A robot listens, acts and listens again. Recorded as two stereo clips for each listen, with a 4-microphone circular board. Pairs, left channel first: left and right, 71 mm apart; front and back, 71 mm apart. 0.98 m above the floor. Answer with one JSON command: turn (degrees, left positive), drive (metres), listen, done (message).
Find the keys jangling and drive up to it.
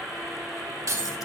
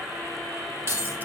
{"turn": -130}
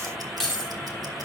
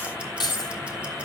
{"drive": 1.0}
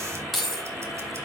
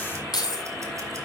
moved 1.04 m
{"drive": 1.0}
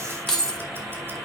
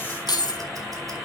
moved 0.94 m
{"drive": 1.0}
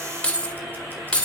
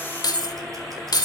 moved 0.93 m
{"turn": 15}
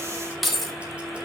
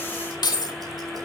{"drive": 1.0}
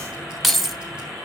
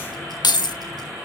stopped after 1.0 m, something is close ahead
{"done": "I am next to the keys jangling."}